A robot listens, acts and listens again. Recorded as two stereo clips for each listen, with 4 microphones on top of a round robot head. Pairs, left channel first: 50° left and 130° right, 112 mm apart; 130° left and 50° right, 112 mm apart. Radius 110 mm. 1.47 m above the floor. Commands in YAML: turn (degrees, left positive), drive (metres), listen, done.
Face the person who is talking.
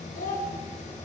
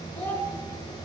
turn: 55
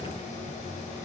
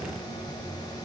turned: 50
listen: true
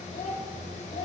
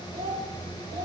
done: "Facing the child speaking, over 4 m away."